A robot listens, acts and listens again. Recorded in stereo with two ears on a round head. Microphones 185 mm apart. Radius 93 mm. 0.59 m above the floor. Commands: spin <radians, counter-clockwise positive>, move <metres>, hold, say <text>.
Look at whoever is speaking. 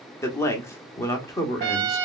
spin 0.52
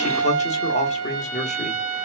spin 2.36
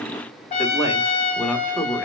say Found it: a man speaking, straight ahead, 1 to 2 m away.